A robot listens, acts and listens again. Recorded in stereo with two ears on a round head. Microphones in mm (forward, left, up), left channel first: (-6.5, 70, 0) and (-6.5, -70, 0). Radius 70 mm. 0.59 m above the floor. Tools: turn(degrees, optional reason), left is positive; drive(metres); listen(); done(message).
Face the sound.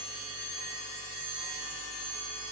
listen()
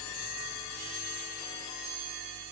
listen()
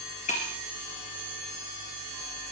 turn(degrees=50, reason="The breaking glass: about 50° left or 130° left.")
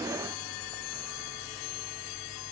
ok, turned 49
listen()
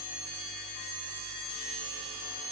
done("I heard breaking glass, but can't make it out now. It was about straight ahead or 80° left.")